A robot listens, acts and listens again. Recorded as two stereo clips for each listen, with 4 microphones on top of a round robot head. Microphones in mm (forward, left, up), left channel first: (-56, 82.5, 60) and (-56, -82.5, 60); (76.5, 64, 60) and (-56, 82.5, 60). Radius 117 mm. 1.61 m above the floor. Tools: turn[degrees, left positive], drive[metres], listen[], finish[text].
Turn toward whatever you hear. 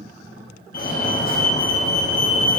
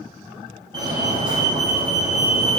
Thought: The fire alarm: 115° left.
Action: turn[115]
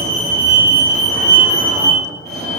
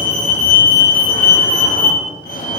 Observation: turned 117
Action: finish[Found it: a fire alarm, straight ahead.]